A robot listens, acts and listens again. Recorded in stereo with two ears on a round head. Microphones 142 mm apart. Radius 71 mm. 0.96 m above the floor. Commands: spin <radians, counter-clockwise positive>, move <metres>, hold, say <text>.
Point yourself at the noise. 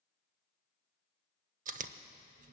spin -0.87
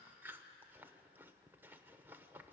spin -0.26
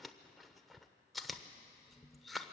say Facing the chewing.